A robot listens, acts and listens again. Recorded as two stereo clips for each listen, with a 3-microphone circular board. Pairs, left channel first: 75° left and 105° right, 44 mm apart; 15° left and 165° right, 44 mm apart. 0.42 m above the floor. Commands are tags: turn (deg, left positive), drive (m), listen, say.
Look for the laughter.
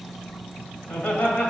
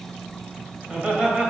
<turn deg="125"/>
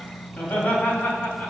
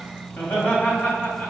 <turn deg="40"/>
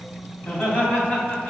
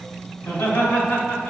<say>Found it: laughter, straight ahead.</say>